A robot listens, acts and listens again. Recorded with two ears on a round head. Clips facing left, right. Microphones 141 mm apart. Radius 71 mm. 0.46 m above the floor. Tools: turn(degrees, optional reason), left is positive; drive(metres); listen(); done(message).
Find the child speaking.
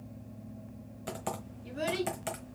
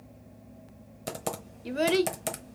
turn(degrees=-70, reason="The child speaking: about 70° right or 110° right.")
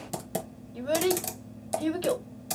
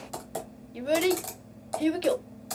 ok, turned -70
turn(degrees=-20, reason="So it is at 20° right.")
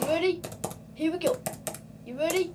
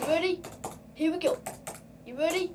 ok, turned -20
done("Facing the child speaking, under 1 m away.")